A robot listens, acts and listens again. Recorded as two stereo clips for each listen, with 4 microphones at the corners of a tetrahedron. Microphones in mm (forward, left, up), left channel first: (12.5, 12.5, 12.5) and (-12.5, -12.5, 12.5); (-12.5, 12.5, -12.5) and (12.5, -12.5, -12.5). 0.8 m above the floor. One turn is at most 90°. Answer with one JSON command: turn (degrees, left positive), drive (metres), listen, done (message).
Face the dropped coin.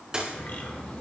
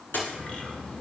{"turn": 90}
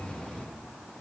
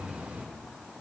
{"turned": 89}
{"turn": 65}
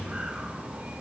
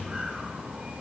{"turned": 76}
{"turn": -10}
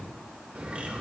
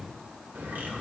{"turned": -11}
{"done": "I heard a dropped coin from this way, but can't make it out now."}